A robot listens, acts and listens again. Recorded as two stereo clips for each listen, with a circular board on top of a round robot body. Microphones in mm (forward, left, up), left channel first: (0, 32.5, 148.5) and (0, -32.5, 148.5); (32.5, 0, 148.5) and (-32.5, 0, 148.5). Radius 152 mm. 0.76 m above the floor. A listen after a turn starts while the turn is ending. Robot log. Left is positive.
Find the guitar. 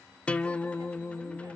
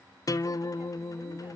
note: The guitar: 20° left.
cmd yaw +20
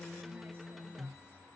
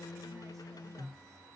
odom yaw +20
end: Facing the guitar, under 1 m away.